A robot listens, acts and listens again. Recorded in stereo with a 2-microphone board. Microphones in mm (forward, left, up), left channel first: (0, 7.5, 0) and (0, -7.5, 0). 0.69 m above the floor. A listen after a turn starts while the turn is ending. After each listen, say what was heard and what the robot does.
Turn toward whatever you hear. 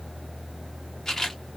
The camera shutter: about 35° left or 145° left. Turn 35° left.
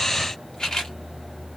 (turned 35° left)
So it is at 100° left. Turn 100° left.
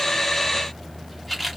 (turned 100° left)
The camera shutter is now 10° left. Turn 10° left.
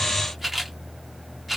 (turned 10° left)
Facing the camera shutter.